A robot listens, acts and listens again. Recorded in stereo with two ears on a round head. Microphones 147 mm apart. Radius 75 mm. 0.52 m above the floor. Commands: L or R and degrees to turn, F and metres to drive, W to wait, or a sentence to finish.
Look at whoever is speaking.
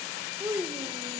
R30
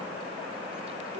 W
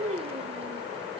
R135
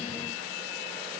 W
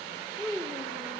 Found it: a child speaking, straight ahead, 1 to 2 m away.